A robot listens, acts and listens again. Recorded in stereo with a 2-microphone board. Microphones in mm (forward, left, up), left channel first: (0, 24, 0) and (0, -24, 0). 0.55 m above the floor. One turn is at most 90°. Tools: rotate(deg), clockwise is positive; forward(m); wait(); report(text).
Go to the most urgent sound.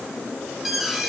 rotate(30)
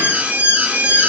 rotate(90)
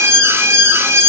rotate(90)
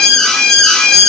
rotate(-15)
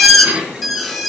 forward(1.0)
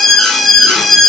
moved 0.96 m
forward(1.0)
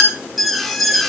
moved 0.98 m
forward(1.0)
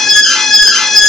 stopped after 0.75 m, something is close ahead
rotate(-15)
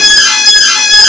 report("Arrived at the alarm, straight ahead.")